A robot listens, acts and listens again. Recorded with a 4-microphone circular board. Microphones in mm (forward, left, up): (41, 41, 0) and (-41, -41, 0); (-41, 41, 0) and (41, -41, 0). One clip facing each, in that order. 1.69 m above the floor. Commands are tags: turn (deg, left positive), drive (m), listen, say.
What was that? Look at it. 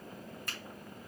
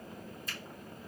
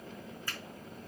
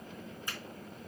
<turn deg="25"/>
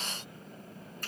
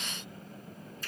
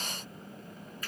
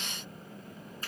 <listen/>
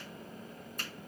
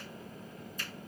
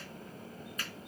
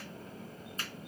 <listen/>
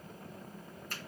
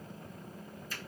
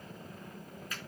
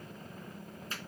<turn deg="15"/>
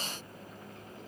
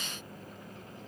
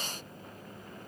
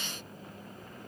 <listen/>
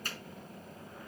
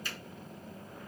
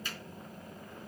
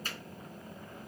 <say>Found it: a finger snap, straight ahead, over 4 m away.</say>